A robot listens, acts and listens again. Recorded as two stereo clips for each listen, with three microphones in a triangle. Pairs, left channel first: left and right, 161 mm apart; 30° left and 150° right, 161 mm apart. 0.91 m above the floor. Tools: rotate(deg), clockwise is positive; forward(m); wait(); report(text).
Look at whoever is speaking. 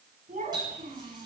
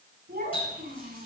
rotate(130)
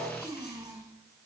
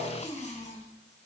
rotate(25)
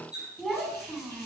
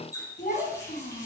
report("Found it: a child speaking, straight ahead.")